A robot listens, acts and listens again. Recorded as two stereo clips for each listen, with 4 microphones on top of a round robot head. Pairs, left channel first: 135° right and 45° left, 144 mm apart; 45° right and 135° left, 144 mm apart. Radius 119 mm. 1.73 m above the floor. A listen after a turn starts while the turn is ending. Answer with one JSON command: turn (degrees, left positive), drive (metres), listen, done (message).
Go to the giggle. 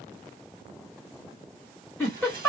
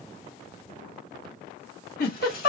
{"turn": -55}
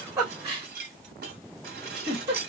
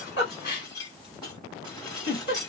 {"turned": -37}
{"turn": -15}
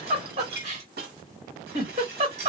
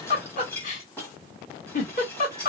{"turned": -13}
{"drive": 1.0}
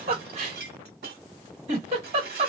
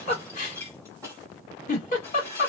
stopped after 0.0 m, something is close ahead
{"done": "Something is in my way. I am facing the giggle but have not reached it."}